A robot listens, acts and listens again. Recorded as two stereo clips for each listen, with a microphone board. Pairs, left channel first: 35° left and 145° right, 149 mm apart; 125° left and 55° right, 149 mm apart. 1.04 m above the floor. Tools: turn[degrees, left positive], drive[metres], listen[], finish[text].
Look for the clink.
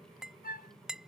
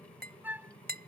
Thought: The clink: 60° right.
Action: turn[-60]
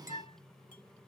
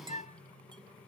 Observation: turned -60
Action: listen[]
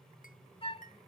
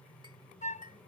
Action: listen[]
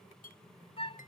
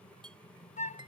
Action: finish[Found it: a clink, straight ahead.]